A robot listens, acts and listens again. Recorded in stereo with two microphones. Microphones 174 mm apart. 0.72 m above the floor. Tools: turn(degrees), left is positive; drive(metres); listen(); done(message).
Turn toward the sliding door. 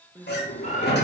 turn(degrees=75)
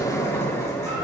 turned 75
turn(degrees=20)
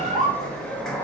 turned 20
done("Facing the sliding door.")